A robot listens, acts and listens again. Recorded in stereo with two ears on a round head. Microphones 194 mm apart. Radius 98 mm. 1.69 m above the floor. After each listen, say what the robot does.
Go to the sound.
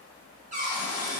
Turn 35° right.
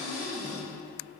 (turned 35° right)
Drive 1.0 m forward.
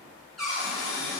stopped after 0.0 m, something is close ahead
Blocked. The cupboard door is further on, straight ahead.